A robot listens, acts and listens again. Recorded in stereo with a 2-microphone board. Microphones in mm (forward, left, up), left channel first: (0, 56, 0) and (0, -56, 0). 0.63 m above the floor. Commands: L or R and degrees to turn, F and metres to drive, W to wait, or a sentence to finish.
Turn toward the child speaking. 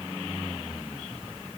W
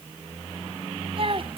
R50
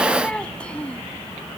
L10
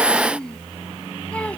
L10
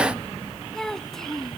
Found it: a child speaking, straight ahead.